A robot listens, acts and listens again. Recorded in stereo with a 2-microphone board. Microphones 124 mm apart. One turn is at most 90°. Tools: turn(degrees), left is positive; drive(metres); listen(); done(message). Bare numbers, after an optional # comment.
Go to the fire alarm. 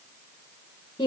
listen()
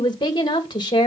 listen()
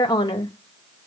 done("I can't make out a fire alarm, only a woman speaking.")